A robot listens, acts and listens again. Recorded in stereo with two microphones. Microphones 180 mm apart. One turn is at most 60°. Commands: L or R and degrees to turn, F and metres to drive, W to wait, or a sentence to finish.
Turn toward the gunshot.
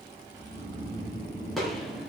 L30
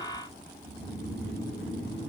W
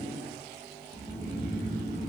I heard a gunshot, but can't make it out now. It was about 30° right or 150° left.